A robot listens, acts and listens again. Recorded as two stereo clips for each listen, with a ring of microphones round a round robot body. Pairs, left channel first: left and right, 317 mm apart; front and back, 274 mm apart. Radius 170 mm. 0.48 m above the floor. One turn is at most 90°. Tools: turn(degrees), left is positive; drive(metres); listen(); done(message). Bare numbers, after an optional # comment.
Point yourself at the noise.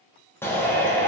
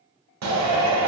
# The shout: 175° left.
turn(90)
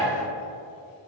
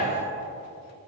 # Nothing new. It was at 85° left.
turn(85)
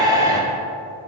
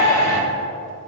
# The shout is now 10° right.
turn(-10)
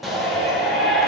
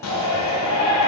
done("Found it: a shout, straight ahead.")